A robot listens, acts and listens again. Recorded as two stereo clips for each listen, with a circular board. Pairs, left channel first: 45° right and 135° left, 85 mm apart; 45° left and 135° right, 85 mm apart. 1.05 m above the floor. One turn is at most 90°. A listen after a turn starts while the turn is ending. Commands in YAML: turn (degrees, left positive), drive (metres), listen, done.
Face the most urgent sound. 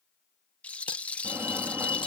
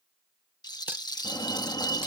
turn: 70
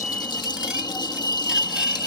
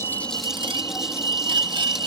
done: "Found it: a fire alarm, straight ahead."